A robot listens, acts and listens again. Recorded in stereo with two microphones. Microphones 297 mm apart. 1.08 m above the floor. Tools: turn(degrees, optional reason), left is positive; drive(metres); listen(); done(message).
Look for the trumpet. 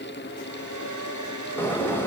listen()
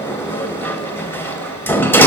listen()
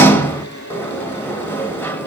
done("I can't make out a trumpet, only a hair dryer and a sliding door.")